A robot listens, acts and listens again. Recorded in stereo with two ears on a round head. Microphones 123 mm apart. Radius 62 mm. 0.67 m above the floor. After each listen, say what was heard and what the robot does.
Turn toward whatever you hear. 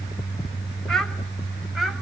Turn 30° left.
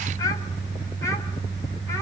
So it is at 155° left. Turn 155° left.
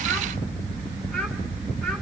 Keep listening.
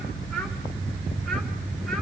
Keep listening.
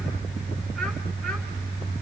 I heard a child speaking from this way, but can't make it out now.